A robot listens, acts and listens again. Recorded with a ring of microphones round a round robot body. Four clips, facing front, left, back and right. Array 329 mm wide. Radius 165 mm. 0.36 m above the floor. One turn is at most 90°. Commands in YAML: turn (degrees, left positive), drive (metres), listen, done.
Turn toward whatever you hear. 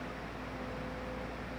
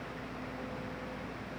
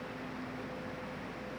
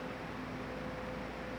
listen: true
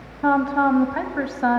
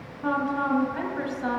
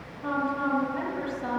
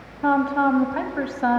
turn: -35
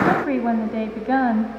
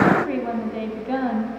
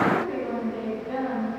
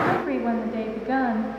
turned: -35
turn: -10
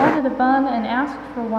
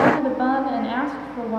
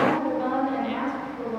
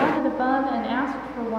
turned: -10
done: "Found it: a woman speaking, straight ahead."